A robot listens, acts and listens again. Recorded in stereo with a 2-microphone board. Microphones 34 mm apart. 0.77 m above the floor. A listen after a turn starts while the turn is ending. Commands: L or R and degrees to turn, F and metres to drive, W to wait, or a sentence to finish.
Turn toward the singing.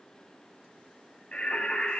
L40
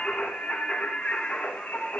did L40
L105
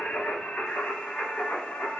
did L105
L50
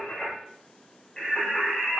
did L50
L20
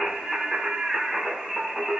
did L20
Found it: singing, straight ahead, over 4 m away.